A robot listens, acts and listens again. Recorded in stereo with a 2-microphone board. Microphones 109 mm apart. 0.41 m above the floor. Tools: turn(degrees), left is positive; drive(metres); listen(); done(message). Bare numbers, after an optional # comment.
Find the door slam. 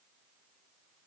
listen()
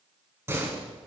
# The door slam: about 25° right or 155° right.
turn(-25)
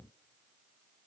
listen()
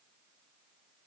done("I heard a door slam, but can't make it out now. It was about straight ahead or 130° right.")